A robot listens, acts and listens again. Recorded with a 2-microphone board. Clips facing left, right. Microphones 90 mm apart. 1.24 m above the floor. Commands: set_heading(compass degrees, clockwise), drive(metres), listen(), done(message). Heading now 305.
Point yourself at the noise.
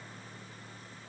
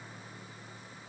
listen()
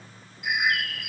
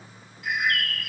set_heading(275)
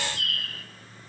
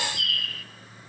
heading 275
set_heading(135)
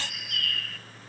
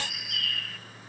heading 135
done("Found it: a bird, straight ahead.")